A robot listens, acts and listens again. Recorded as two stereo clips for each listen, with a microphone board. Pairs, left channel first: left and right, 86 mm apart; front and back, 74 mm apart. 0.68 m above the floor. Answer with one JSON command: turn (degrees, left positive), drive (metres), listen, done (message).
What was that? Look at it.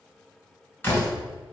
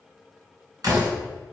{"turn": 155}
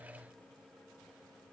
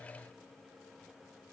{"done": "I heard a door slam from this way, but can't make it out now."}